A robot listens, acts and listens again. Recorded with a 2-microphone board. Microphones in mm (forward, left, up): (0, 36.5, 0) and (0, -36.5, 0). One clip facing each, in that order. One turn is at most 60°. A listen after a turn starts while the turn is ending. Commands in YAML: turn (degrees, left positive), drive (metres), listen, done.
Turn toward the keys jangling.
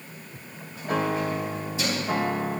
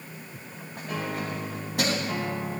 turn: -60
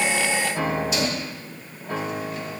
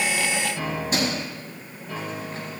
turn: -45
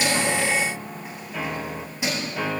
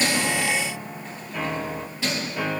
turn: 20
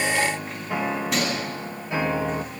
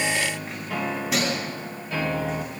done: "Facing the keys jangling."